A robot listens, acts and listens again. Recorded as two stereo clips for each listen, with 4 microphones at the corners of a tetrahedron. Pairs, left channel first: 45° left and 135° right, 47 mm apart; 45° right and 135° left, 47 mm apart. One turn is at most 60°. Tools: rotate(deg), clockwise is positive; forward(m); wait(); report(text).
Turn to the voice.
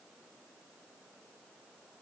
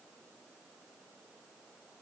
wait()
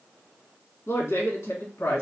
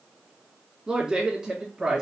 rotate(-55)
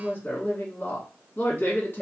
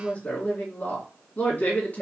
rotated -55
report("Found it: a woman speaking, straight ahead, 2 to 4 m away.")